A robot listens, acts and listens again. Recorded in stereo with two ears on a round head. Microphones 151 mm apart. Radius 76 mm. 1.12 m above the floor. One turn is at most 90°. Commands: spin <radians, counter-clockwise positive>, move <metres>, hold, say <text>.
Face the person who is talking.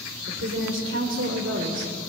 spin -1.57
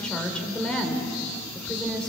say Found it: a woman speaking, straight ahead.